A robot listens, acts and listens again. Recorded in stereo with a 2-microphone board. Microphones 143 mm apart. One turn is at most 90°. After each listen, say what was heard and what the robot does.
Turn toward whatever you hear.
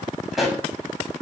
Turn 30° left.
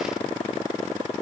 Keep listening.
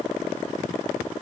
I heard a pop, but can't make it out now. It was about 30° right or 150° left.